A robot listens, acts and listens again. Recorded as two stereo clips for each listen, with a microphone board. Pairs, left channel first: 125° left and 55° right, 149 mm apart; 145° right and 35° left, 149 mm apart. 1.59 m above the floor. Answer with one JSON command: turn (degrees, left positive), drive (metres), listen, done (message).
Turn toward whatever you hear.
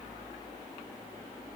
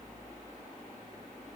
{"listen": true}
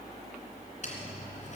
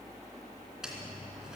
{"turn": 120}
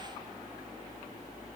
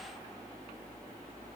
{"done": "I heard a dropped coin from this way, but can't make it out now."}